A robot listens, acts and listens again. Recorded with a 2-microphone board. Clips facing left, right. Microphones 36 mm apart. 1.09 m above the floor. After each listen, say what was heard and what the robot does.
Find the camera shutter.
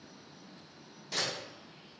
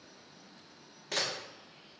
The camera shutter: about 65° right or 115° right. Turn 65° right.
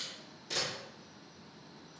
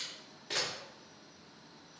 So it is at 35° right. Turn 35° right.
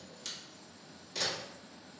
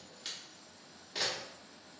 The camera shutter is now 25° right. Turn 25° right.
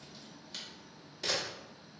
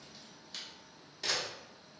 Found it: a camera shutter, straight ahead.